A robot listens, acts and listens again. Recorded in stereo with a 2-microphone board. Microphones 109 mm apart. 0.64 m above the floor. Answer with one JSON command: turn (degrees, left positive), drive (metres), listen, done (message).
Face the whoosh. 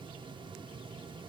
{"listen": true}
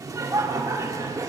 {"listen": true}
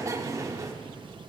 {"done": "I can't make out a whoosh, only laughter."}